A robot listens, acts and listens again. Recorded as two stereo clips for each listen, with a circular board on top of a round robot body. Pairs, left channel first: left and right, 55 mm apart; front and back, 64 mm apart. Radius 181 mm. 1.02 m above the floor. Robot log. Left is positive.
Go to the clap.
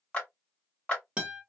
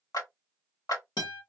note: The clap: 15° left.
cmd yaw +15
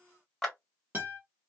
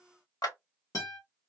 cmd fwd 1.0
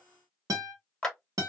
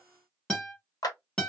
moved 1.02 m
note: The clap is now 10° left.
cmd yaw +10
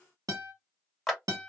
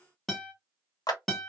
cmd fwd 1.0
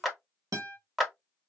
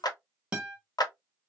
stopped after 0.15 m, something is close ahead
end: Arrived at the clap, straight ahead.